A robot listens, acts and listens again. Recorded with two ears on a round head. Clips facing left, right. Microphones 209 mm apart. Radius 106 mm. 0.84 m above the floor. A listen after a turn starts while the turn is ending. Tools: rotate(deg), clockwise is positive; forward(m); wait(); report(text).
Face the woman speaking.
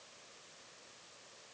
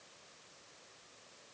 wait()
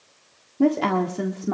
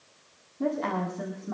rotate(-90)
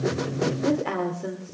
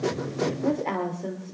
rotate(-15)
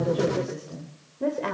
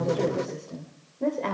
rotate(-10)
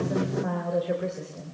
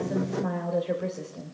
report("Facing the woman speaking, 2 to 4 m away.")